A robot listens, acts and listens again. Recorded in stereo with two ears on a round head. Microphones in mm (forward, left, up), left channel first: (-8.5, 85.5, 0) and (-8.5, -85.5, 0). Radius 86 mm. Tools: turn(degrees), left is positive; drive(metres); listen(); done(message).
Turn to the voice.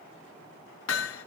listen()
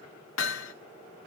listen()
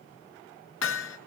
done("I can't make out anyone speaking to turn to.")